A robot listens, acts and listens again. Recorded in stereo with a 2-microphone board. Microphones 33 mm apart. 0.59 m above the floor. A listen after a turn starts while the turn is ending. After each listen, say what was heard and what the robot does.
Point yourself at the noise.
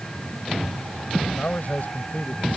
The man speaking: about 55° left or 125° left. Turn 55° left.
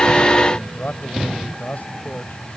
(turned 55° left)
So it is at 65° left. Turn 65° left.
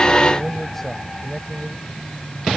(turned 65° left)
The man speaking is now 10° left. Turn 10° left.
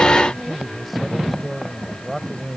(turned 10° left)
Found it: a man speaking, straight ahead.